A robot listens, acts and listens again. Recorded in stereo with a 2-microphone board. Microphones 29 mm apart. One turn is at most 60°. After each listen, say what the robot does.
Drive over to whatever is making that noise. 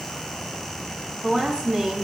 Turn 40° right.
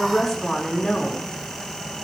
Drive 1.0 m forward.
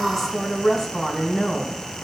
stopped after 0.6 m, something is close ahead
Something is in my way. I am facing the woman speaking but have not reached it.